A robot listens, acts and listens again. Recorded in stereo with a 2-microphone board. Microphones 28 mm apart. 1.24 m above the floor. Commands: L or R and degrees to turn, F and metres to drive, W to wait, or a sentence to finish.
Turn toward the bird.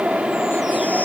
W
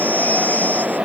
W
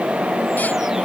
I can't make out a bird.